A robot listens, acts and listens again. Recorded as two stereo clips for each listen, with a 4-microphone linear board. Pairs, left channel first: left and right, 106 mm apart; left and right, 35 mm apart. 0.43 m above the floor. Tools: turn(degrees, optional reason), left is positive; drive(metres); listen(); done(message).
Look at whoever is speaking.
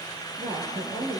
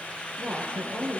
turn(degrees=-90)
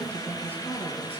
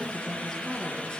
turn(degrees=15, reason="So it is at 15° left.")
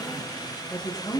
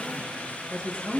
turn(degrees=10, reason="The woman speaking is now 10° left.")
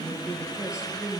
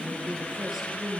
done("Facing the woman speaking, over 4 m away.")